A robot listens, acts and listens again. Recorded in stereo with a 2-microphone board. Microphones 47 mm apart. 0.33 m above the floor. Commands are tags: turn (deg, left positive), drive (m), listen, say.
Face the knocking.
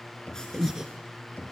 <turn deg="35"/>
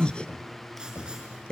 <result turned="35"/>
<turn deg="110"/>
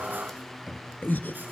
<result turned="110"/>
<say>Found it: knocking, straight ahead.</say>